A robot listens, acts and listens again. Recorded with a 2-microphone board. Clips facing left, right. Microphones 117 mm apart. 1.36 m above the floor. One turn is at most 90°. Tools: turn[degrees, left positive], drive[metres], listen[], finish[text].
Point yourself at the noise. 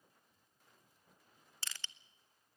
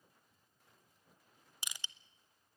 Action: turn[-30]
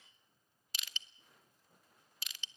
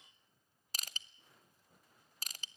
Thought: So it is at 135° right.
Action: turn[-90]
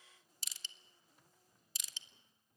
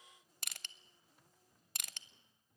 Thought: The crushing is now 65° right.
Action: turn[-65]
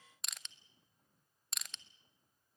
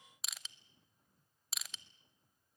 Action: finish[Facing the crushing, under 1 m away.]